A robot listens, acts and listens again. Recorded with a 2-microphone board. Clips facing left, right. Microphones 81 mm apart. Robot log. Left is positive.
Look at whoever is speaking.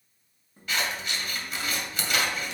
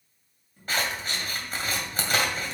cmd idle
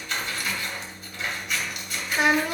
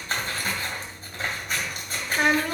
cmd yaw +30
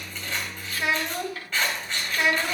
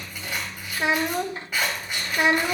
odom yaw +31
note: So it is at 25° right.
cmd yaw -25
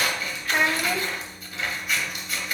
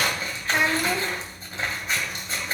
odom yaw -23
end: Facing the child speaking, under 1 m away.